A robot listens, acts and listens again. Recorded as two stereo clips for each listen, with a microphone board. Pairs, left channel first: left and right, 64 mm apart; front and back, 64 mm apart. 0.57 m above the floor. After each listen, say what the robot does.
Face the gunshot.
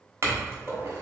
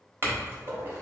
Turn 180° left.
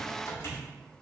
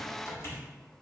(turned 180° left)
Facing where the gunshot came from. I can't hear it now.